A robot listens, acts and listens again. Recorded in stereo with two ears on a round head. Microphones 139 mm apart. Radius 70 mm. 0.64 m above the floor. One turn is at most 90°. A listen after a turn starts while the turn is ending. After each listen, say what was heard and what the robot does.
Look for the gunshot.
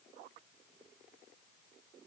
Keep listening.
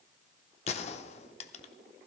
The gunshot: about 40° left or 140° left. Turn 40° left.
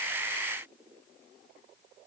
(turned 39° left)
Keep listening.
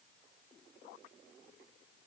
I heard a gunshot, but can't make it out now. It was about straight ahead or 100° left.